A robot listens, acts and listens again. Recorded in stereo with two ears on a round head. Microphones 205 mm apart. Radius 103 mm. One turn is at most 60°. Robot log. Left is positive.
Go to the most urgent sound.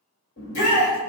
note: The shout: about 55° left or 125° left.
cmd yaw +55
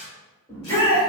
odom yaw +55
note: So it is at 15° left.
cmd yaw +15
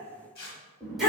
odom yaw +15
cmd fwd 1.0
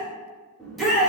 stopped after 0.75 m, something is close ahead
end: I am next to the shout.